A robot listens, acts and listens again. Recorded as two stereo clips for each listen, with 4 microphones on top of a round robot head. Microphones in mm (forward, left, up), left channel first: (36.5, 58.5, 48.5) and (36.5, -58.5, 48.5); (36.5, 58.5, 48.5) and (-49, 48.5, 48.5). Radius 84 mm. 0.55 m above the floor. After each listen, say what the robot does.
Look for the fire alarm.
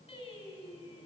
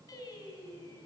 Keep listening.
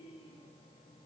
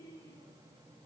Keep listening.
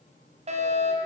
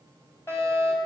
Turn 60° right.
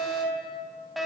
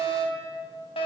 Found it: a fire alarm, straight ahead, over 4 m away.